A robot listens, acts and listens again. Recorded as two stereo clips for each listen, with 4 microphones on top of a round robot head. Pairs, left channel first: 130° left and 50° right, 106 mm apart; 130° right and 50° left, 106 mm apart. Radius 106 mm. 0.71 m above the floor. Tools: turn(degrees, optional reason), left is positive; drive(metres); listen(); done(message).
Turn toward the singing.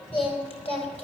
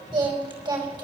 turn(degrees=100, reason="The singing: 100° left.")
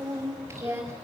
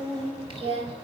turn(degrees=15, reason="The singing is now 15° left.")
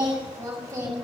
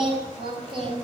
turn(degrees=10, reason="The singing is now 10° left.")
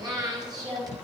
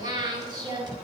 done("Found it: singing, straight ahead.")